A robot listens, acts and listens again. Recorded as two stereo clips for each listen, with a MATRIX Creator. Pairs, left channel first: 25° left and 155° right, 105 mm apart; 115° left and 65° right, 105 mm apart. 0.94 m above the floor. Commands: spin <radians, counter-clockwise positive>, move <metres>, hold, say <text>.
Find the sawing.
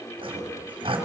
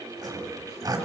spin -2.09
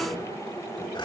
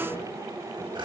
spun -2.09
spin -0.35
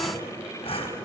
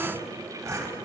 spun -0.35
say Found it: sawing, straight ahead, 2 to 4 m away.